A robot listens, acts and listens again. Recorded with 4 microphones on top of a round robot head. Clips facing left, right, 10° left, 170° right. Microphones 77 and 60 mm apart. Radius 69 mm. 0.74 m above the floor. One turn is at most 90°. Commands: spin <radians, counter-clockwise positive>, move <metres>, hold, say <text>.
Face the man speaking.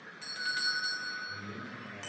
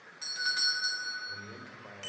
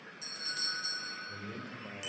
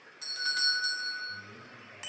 spin -0.35
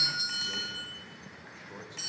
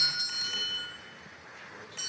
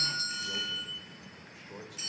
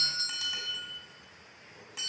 spin 0.35
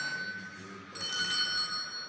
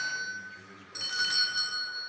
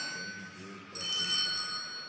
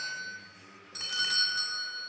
say Facing the man speaking, 2 to 4 m away.